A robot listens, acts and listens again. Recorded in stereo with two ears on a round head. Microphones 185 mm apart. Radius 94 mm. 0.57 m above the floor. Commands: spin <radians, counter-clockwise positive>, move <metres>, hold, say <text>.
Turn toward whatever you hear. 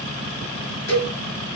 spin 0.96
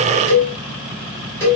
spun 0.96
spin 0.26
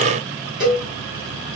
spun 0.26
say Facing the cowbell.